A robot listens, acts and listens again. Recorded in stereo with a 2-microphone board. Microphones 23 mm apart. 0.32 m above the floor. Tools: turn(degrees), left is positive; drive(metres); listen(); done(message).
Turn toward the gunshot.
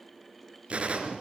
turn(degrees=-55)
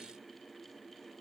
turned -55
listen()
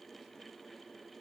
done("I heard a gunshot, but can't make it out now. It was about straight ahead or 70° right.")